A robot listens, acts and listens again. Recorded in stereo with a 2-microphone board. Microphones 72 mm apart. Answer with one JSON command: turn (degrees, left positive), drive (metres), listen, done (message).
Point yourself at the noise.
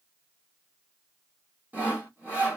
{"turn": -20}
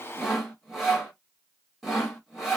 {"done": "Facing the sawing."}